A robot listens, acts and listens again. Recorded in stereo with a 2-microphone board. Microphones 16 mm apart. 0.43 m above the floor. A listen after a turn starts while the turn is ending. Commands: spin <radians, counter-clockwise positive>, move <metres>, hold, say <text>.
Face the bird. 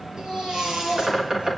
spin -0.44
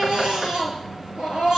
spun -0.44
hold
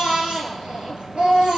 hold
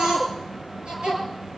say I heard a bird, but can't make it out now. It was about straight ahead or 130° right.